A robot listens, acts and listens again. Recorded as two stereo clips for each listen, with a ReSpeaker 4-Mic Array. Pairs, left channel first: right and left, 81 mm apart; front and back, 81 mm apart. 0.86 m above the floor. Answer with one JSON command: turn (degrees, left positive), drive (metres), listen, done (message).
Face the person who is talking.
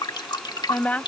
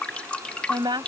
{"turn": -160}
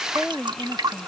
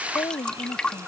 {"done": "Found it: a woman speaking, straight ahead."}